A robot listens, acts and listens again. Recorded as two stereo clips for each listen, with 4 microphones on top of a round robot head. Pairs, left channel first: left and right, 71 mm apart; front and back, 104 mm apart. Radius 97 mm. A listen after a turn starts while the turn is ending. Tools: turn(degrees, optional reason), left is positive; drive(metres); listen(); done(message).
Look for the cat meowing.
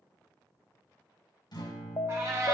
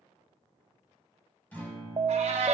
turn(degrees=-150, reason="The cat meowing: 150° right.")
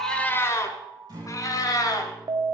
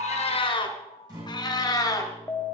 turn(degrees=60, reason="The cat meowing is now 60° left.")
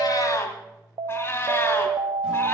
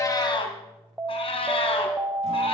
turn(degrees=35, reason="The cat meowing is now 35° left.")
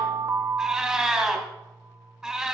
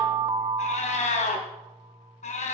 done("Found it: a cat meowing, straight ahead, 2 to 4 m away.")